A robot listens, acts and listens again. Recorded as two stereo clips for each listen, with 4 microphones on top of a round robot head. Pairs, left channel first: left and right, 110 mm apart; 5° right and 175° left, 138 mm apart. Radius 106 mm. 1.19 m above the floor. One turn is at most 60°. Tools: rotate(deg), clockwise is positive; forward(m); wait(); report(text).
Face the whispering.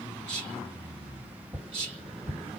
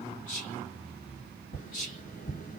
rotate(40)
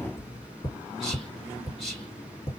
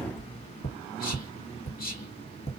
report("Facing the whispering.")